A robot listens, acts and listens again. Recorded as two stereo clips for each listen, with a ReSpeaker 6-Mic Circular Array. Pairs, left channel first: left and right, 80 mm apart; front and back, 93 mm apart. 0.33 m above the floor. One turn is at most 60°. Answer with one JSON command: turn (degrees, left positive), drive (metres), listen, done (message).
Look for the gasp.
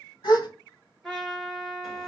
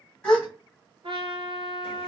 {"turn": 60}
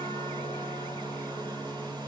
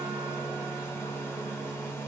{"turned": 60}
{"turn": 15}
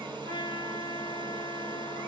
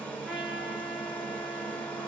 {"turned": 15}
{"done": "I heard a gasp from this way, but can't make it out now."}